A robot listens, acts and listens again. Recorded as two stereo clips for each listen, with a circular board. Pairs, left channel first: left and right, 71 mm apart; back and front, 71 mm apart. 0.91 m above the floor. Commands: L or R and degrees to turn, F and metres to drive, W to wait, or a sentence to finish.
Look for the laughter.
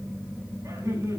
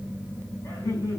R130
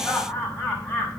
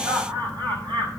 L10
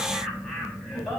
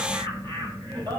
Found it: laughter, straight ahead.